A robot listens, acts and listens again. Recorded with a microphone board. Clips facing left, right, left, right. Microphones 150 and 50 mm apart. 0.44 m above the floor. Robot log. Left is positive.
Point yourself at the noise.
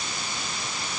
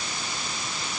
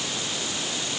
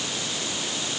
cmd idle
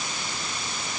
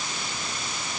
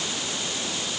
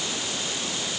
cmd idle
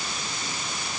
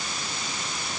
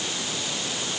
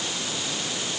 end: I can't make out anything to turn to.